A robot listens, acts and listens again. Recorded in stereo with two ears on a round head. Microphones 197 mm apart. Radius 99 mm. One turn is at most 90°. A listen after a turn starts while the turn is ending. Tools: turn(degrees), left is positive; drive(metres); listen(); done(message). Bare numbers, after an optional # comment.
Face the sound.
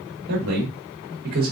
# The man speaking: about 40° right or 140° right.
turn(-40)
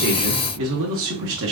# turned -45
# So it is at 115° right.
turn(-90)
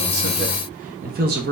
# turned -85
# The man speaking is now 50° right.
turn(-50)
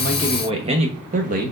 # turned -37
# The man speaking is now 40° right.
turn(-40)
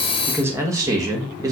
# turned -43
# The man speaking is now 15° right.
turn(-15)
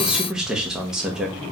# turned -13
done("Found it: a man speaking, straight ahead.")